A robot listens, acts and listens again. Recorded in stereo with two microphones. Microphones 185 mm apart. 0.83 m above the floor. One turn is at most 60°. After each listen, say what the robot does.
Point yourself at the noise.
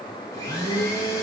Turn 20° left.
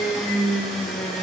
Found it: a blender, straight ahead.